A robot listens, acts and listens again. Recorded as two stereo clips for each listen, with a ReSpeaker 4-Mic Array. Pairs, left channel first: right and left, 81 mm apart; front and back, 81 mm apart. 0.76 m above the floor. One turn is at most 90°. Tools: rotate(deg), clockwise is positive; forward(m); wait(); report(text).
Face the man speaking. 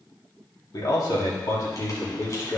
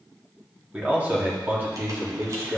rotate(90)
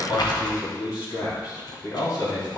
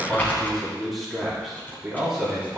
rotate(90)
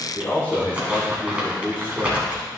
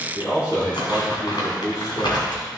rotate(30)
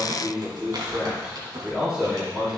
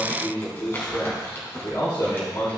rotate(-15)
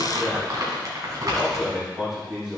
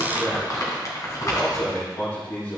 report("Found it: a man speaking, straight ahead.")